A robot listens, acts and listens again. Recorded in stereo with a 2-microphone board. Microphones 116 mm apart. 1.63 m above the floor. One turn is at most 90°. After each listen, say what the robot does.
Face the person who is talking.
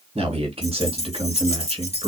Turn 55° right.
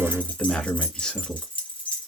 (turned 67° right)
Facing the man speaking.